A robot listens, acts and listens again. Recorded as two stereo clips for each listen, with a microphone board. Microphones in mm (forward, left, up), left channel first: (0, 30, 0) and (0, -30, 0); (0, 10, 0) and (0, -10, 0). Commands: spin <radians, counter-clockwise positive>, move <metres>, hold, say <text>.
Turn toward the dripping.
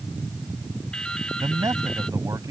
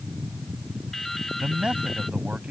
spin 0.52
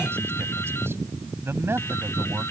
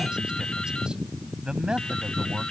spin 2.36
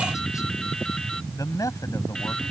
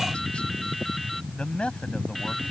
spin 0.17
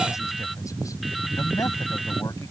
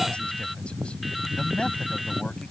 say Facing the dripping.